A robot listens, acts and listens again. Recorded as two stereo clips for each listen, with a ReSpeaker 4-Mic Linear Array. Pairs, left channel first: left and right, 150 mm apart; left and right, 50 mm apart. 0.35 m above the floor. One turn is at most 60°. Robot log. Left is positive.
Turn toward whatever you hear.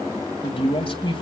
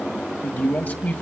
note: The man speaking: about 35° left or 145° left.
cmd yaw +35
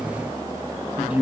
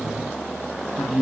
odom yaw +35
note: So it is at 10° right.
cmd yaw -10
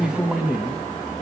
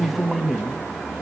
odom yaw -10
end: Found it: a man speaking, straight ahead, 2 to 4 m away.